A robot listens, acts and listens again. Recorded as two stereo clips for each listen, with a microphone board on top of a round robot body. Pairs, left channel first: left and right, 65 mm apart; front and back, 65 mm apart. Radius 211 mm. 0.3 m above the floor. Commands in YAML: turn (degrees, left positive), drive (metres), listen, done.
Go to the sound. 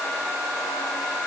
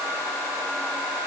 listen: true
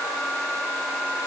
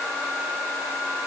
listen: true
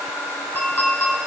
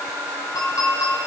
turn: 30
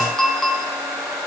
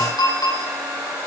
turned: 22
drive: 1.0
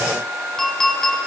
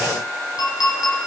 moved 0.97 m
drive: 1.0
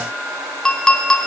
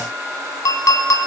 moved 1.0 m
turn: 10
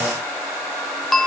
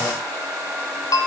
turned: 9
drive: 1.0
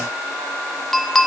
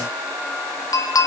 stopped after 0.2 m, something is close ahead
done: "Arrived at the clink, straight ahead."